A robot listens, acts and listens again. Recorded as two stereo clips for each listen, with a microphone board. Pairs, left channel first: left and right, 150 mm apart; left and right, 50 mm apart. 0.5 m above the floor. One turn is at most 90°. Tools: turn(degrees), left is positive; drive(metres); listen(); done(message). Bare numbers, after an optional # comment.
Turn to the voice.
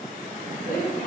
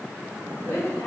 turn(90)
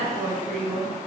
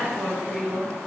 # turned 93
done("Facing the woman speaking.")